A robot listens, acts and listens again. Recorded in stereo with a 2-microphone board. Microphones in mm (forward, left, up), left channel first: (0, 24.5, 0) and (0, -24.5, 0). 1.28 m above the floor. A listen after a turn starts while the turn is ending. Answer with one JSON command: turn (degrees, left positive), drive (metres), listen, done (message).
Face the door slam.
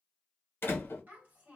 {"turn": 45}
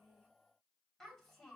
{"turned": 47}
{"listen": true}
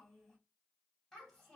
{"done": "I heard a door slam, but can't make it out now. It was about straight ahead or 85° left."}